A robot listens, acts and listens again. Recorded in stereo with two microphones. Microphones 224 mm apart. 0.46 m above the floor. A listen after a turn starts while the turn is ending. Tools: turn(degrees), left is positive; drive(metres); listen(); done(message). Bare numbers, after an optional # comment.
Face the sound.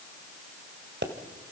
# The pop: about 55° right or 125° right.
turn(-55)
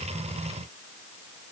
listen()
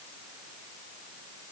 done("I heard a pop, but can't make it out now. It was about straight ahead or 70° right.")